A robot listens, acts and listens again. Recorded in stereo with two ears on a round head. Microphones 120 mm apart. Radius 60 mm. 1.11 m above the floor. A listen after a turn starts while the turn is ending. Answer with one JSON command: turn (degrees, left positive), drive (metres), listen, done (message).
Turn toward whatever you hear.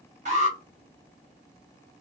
{"turn": -55}
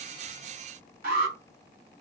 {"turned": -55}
{"turn": -65}
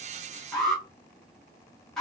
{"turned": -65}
{"done": "Facing the alarm."}